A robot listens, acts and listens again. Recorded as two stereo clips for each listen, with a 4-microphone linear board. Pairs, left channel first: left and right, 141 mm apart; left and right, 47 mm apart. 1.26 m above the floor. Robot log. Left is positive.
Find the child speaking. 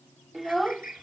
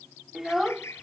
cmd yaw +30
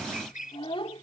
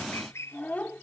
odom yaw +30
note: So it is at 140° left.
cmd yaw +140
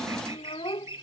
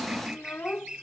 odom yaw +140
note: The child speaking is now 40° left.
cmd yaw +40
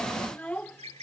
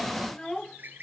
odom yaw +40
note: The child speaking is now 10° left.
cmd yaw +10
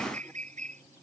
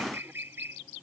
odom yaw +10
cmd idle
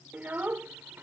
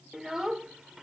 note: The child speaking is now 15° right.
cmd yaw -15
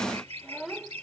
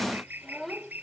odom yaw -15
end: Facing the child speaking.